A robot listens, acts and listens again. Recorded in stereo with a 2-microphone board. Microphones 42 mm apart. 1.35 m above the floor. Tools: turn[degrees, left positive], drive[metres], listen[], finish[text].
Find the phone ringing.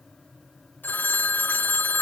Thought: The phone ringing: about 50° left or 130° left.
Action: turn[50]
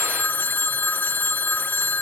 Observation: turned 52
Thought: So it is at 65° left.
Action: turn[65]
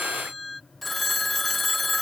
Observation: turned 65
Action: finish[Found it: a phone ringing, straight ahead.]